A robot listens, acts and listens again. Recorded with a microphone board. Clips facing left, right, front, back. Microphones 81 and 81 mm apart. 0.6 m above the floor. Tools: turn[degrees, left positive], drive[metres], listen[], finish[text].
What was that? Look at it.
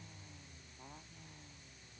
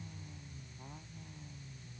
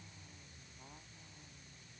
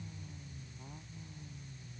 Action: listen[]
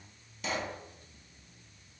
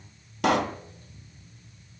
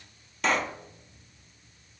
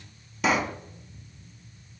Thought: The pop: 95° right.
Action: turn[-95]
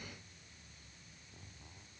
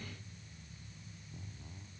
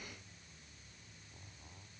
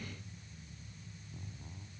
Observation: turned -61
Thought: Nothing new. It was at 35° right.
Action: turn[-35]
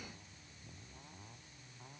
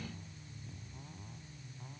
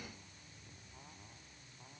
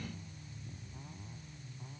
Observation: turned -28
Thought: Nothing new. It was at 10° right.
Action: turn[-10]
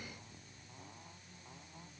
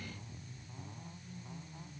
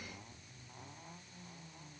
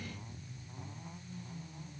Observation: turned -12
Action: finish[I heard a pop from this way, but can't make it out now.]